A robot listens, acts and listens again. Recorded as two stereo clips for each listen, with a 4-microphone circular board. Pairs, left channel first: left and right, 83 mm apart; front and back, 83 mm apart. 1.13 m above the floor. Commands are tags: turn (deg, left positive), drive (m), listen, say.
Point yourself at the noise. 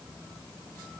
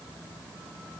<listen/>
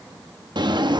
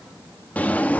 <turn deg="-70"/>
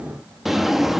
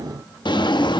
<say>Facing the drawer.</say>